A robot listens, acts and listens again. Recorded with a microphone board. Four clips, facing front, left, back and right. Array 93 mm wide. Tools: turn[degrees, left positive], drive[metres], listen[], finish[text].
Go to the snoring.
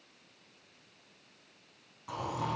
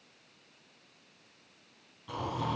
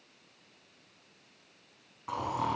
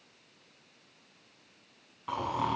Thought: The snoring: 120° right.
Action: turn[-120]
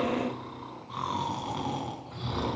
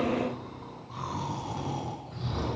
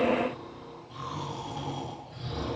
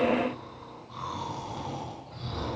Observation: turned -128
Action: drive[1.0]
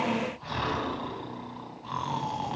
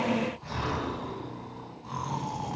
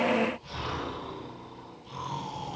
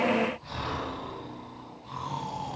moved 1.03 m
Thought: The snoring is now 15° left.
Action: turn[15]
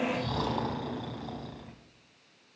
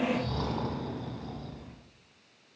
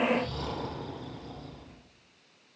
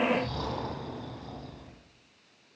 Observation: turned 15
Action: drive[1.0]
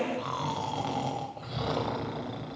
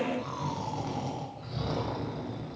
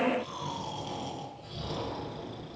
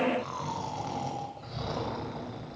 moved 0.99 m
Action: drive[1.0]
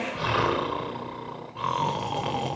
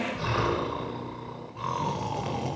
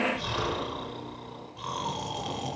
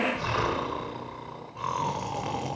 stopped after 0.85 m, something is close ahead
Thought: The snoring is now 10° right.
Action: turn[-10]
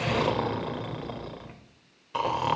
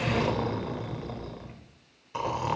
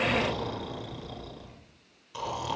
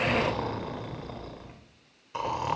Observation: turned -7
Action: finish[Arrived at the snoring, straight ahead.]